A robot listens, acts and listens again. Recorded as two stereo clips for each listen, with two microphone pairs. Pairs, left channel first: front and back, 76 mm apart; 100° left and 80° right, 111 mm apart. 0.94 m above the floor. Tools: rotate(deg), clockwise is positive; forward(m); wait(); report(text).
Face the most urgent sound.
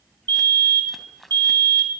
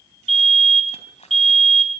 rotate(170)
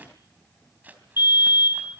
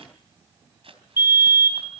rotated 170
rotate(15)
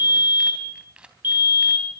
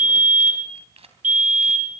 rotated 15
report("Found it: a fire alarm, straight ahead, 2 to 4 m away.")